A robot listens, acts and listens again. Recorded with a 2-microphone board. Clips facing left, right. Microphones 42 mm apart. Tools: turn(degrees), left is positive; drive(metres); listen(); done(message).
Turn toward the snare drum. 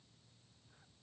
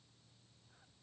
listen()
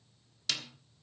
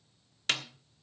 turn(degrees=-40)
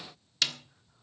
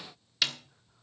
done("Found it: a snare drum, straight ahead.")